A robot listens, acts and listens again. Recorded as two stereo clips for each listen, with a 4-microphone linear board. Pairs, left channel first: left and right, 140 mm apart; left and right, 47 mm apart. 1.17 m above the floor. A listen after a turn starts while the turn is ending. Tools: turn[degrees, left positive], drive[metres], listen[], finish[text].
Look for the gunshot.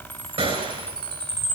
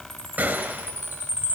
Thought: The gunshot: about 45° right or 135° right.
Action: turn[-45]
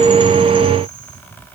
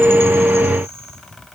Action: listen[]
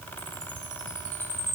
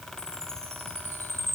Action: finish[I heard a gunshot, but can't make it out now. It was about straight ahead or 90° right.]